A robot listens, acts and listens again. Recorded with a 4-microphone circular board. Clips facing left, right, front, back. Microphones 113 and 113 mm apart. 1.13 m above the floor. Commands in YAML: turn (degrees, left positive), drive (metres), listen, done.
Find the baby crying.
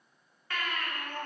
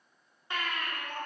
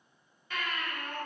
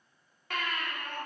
turn: -160
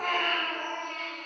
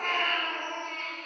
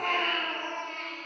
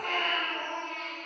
done: "Facing the baby crying, 1 to 2 m away."